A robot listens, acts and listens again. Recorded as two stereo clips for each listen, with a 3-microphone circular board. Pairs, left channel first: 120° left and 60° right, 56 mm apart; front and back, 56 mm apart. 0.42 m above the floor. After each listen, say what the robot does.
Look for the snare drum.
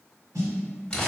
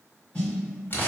Turn 65° right.
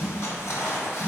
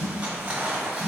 Found it: a snare drum, straight ahead, 2 to 4 m away.